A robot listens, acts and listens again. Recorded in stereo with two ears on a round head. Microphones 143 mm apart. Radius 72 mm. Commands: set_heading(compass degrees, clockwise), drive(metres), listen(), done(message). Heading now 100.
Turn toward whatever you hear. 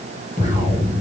set_heading(55)
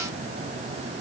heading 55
listen()
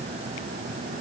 done("I heard an explosion, but can't make it out now. It was about straight ahead or 90° left.")